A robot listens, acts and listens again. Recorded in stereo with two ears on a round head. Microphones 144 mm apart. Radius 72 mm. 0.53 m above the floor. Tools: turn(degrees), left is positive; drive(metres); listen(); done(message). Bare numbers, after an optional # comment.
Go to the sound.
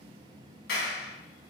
# The clap: about 75° left or 105° left.
turn(75)
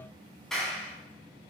drive(1.0)
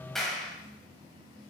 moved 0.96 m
drive(1.0)
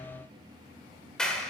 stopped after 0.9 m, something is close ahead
done("I am next to the clap.")